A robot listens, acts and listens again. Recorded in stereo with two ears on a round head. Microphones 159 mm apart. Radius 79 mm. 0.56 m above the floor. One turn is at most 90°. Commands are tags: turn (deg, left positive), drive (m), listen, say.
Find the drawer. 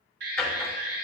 <turn deg="30"/>
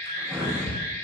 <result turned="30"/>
<turn deg="-15"/>
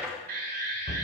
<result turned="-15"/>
<say>Found it: a drawer, straight ahead.</say>